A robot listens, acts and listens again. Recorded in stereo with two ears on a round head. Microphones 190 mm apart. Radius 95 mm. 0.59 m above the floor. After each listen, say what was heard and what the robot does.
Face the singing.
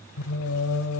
Turn 90° left.
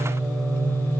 Facing the singing, under 1 m away.